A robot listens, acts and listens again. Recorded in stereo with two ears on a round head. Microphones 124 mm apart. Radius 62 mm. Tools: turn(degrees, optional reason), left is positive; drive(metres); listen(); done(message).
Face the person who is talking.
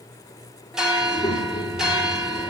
turn(degrees=35, reason="The child speaking: about 35° left or 145° left.")
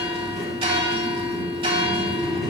done("Found it: a child speaking, straight ahead.")